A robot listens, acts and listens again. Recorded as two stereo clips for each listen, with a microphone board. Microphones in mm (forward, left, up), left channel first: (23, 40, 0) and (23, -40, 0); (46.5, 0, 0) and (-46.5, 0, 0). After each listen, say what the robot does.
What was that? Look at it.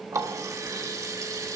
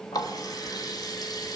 Turn 45° right.
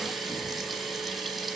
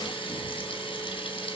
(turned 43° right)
Found it: a running tap, straight ahead, 1 to 2 m away.